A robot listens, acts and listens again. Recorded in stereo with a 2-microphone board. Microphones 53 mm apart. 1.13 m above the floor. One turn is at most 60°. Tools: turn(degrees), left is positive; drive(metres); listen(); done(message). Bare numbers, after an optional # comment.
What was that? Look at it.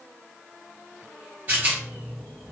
# The rattle: about 30° right or 150° right.
turn(-30)
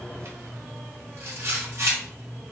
# So it is at 115° right.
turn(-60)
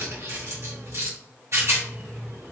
# The rattle is now 70° right.
turn(-60)
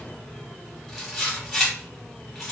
done("Facing the rattle, 1 to 2 m away.")